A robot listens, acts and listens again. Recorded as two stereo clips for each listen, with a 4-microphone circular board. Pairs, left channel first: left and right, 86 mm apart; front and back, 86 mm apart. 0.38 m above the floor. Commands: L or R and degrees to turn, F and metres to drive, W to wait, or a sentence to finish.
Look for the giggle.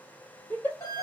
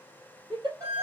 L160
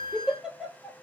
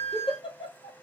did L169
Found it: a giggle, straight ahead, 1 to 2 m away.